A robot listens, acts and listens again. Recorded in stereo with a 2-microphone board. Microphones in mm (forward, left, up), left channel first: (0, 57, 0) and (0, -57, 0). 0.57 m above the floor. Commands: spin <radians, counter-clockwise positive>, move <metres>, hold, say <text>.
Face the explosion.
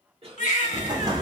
spin -0.61
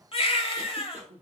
hold
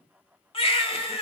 say I heard an explosion, but can't make it out now. It was about straight ahead or 110° right.